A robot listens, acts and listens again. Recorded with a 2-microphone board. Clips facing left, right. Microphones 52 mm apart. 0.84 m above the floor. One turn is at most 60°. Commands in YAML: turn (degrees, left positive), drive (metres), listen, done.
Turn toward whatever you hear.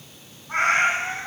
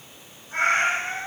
turn: 60
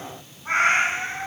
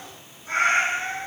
turn: 55
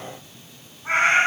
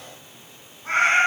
turn: 20
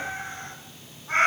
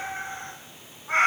done: "Found it: a cat meowing, straight ahead, 1 to 2 m away."